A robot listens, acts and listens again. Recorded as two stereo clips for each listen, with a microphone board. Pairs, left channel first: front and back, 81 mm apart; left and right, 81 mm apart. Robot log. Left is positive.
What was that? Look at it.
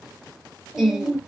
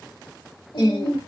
note: The singing: 100° left.
cmd yaw +100
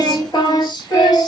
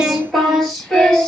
note: The singing is now 15° left.
cmd yaw +15
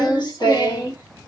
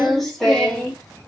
note: The singing is now 15° left.
cmd yaw +15
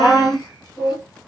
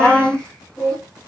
note: The singing is now 20° left.
cmd yaw +20
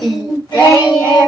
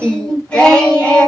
note: The singing is now 15° left.
cmd yaw +15
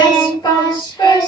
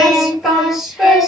end: Found it: singing, straight ahead, 1 to 2 m away.